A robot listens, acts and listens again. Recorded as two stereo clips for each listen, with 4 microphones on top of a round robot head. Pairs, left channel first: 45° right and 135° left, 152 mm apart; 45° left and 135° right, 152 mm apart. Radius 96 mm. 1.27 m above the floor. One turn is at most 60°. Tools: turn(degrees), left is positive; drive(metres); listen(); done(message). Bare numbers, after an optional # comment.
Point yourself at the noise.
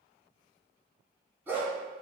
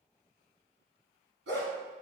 # The dog barking: 145° right.
turn(-60)
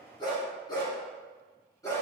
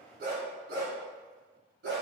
# The dog barking is now 115° right.
turn(-60)
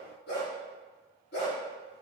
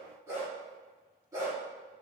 # The dog barking is now 65° right.
turn(-60)
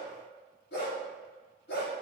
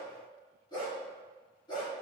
# The dog barking is now 20° right.
turn(-20)
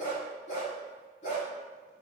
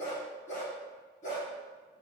done("Found it: a dog barking, straight ahead, over 4 m away.")